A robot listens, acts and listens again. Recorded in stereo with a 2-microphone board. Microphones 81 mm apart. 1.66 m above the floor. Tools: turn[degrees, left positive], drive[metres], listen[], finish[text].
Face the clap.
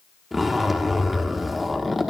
Action: listen[]
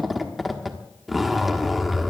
Action: listen[]
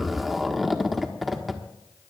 Action: finish[I can't make out a clap to turn to.]